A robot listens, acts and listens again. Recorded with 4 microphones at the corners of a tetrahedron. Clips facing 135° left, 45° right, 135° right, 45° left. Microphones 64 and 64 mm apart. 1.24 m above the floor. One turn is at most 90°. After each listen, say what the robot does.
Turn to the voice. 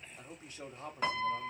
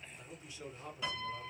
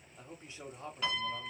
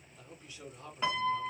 Turn 90° left.
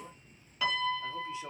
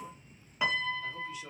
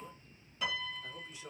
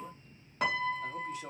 Turn 80° left.
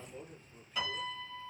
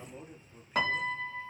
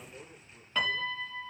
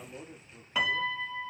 Turn 25° left.
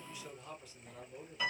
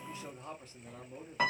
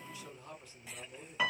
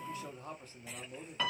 Found it: a man speaking, straight ahead, 1 to 2 m away.